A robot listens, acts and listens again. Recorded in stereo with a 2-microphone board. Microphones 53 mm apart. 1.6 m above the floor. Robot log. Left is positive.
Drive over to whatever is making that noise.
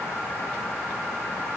cmd idle
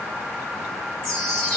cmd yaw +30
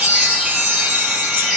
note: So it is at 20° right.
cmd yaw -20
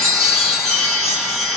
cmd fwd 1.0
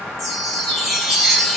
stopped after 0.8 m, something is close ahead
end: Arrived at the chime, straight ahead.